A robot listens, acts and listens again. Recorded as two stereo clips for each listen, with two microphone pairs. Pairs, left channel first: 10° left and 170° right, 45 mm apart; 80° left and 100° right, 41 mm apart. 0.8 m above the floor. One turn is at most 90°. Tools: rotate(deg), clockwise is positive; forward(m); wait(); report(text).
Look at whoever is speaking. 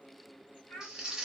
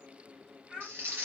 rotate(25)
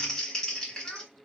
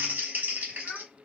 wait()
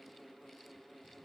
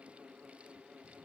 wait()
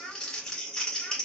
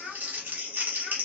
report("Found it: a child speaking, straight ahead, 1 to 2 m away.")